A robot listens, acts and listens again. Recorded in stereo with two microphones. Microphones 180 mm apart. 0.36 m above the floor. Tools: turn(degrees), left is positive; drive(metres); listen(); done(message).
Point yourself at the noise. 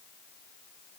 listen()
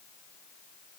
listen()
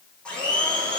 turn(degrees=30)
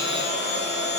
turn(degrees=145)
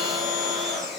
done("Found it: a blender, straight ahead.")